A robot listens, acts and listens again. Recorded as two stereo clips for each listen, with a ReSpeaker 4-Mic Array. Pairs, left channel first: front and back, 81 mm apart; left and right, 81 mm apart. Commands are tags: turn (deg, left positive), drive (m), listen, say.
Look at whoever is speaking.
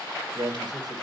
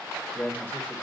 <turn deg="155"/>
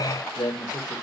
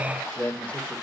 <turn deg="20"/>
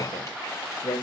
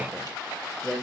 <say>Facing the man speaking, 2 to 4 m away.</say>